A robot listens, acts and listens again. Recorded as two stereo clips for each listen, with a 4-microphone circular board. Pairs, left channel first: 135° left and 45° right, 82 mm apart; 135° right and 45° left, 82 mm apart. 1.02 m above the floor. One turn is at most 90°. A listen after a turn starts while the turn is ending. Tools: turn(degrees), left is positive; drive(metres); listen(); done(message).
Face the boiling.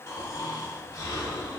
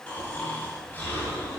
listen()
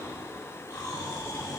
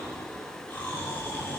listen()
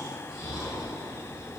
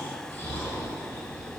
done("I can't make out boiling, only snoring.")